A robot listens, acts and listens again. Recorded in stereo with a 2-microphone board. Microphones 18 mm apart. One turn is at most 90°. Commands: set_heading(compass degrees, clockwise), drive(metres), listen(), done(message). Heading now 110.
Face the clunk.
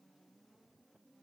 listen()
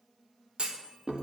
set_heading(185)
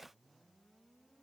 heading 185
listen()
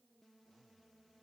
done("I heard a clunk, but can't make it out now. It was about straight ahead or 30° right.")